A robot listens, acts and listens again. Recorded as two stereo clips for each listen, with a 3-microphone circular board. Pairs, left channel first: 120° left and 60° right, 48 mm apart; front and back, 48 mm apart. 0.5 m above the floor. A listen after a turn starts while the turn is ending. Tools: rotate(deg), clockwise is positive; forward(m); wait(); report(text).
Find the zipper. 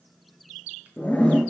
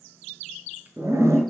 rotate(175)
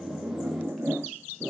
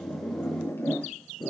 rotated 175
rotate(20)
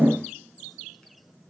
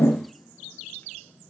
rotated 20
wait()
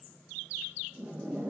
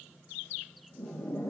rotate(10)
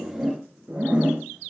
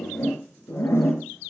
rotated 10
report("Facing the zipper.")